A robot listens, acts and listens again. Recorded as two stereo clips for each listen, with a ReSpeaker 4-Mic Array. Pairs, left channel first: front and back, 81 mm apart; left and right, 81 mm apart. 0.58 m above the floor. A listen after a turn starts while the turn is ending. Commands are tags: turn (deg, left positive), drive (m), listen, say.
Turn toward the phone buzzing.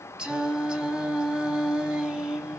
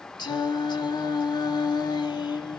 <listen/>
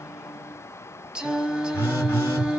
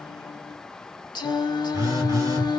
<turn deg="-55"/>
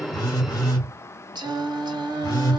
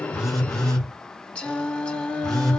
<turn deg="10"/>
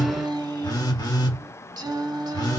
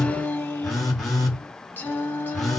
<say>Facing the phone buzzing, 1 to 2 m away.</say>